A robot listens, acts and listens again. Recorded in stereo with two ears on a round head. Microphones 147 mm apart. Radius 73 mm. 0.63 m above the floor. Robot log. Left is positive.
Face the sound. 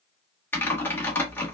cmd yaw +30
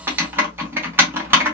note: So it is at 15° right.
cmd yaw -15
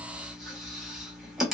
end: Facing the typing on a keyboard.